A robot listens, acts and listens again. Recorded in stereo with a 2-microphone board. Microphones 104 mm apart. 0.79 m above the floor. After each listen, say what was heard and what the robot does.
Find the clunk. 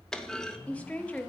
Turn 30° left.
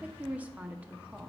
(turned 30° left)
Keep listening.
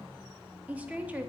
I heard a clunk, but can't make it out now. It was about 25° right or 145° left.